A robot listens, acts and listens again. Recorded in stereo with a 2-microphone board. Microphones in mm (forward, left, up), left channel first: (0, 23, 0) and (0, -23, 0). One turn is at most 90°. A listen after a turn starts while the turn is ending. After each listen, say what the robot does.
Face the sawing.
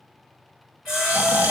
Turn 30° right.
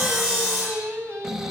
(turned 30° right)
Turn 25° left.
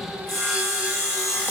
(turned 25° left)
Found it: sawing, straight ahead.